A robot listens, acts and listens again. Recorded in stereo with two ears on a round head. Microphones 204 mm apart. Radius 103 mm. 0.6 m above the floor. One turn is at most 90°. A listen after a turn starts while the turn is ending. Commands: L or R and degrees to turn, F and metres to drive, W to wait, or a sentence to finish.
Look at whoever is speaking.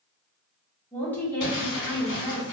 L30
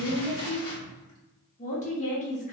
L90
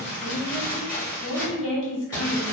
L75
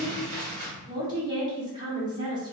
R20
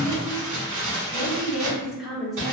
Facing the woman speaking, 1 to 2 m away.